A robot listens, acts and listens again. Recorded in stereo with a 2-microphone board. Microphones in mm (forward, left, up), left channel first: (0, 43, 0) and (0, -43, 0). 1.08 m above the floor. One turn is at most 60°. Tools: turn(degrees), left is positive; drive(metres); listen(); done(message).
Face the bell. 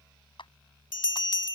turn(degrees=60)
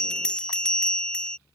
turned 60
turn(degrees=10)
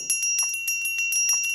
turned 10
done("Found it: a bell, straight ahead.")